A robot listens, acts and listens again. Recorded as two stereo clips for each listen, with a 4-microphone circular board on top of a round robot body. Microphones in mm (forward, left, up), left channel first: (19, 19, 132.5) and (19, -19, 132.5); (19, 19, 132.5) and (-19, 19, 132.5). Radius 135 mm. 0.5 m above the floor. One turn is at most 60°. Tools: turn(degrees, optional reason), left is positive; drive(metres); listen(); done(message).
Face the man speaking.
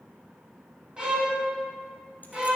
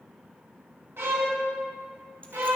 listen()
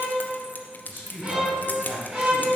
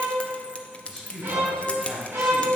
turn(degrees=-60, reason="The man speaking: 90° right.")
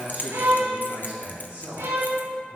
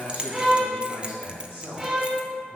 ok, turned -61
turn(degrees=-35, reason="The man speaking is now 35° right.")
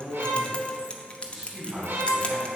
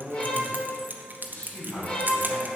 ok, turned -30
done("Found it: a man speaking, straight ahead, over 4 m away.")